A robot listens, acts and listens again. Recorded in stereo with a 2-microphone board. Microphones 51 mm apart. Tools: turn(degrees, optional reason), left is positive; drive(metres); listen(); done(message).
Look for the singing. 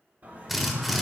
turn(degrees=-40, reason="The singing: about 40° right or 140° right.")
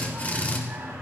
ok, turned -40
turn(degrees=-105, reason="So it is at 105° right.")
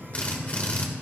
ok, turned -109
listen()
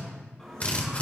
turn(degrees=10, reason="The singing is now 10° left.")
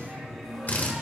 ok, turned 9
done("Facing the singing, over 4 m away.")